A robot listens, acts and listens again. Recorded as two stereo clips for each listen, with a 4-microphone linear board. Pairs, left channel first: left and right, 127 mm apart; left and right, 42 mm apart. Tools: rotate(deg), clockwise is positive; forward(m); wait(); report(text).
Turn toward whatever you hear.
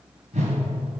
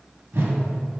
rotate(65)
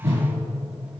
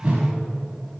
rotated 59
rotate(25)
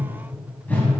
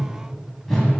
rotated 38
rotate(-15)
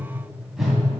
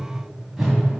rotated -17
report("Found it: a whoosh, straight ahead.")